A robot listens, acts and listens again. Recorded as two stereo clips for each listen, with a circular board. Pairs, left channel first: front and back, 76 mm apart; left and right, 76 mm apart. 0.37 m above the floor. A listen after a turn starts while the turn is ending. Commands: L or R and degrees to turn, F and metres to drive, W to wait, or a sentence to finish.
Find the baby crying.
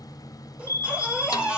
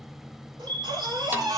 R105
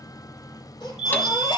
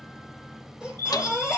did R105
R10
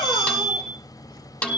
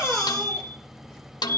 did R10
W
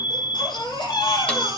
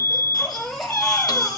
Facing the baby crying, over 4 m away.